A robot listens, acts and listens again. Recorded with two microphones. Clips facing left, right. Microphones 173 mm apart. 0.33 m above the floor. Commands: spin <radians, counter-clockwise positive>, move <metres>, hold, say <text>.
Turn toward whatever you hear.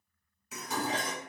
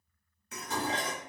spin 0.52
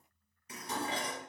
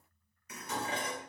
spin 2.62
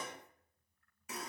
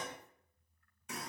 say Found it: dishes clattering, straight ahead.